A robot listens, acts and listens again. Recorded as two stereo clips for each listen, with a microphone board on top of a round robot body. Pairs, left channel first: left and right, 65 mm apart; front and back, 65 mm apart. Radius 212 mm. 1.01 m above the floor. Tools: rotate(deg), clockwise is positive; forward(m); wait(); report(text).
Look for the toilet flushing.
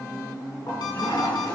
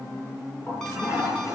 rotate(-50)
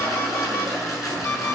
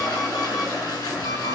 report("Facing the toilet flushing, over 4 m away.")